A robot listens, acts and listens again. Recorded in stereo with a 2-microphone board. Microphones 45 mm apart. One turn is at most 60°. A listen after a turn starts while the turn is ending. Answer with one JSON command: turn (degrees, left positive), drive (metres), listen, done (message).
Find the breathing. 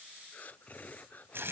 {"turn": 35}
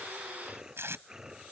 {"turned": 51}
{"turn": -15}
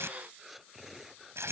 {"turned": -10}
{"done": "Found it: breathing, straight ahead."}